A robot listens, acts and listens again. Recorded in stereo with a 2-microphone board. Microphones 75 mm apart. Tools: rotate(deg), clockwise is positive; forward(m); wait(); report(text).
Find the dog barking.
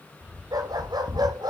rotate(75)
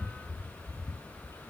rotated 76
wait()
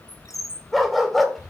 report("Found it: a dog barking, straight ahead, 2 to 4 m away.")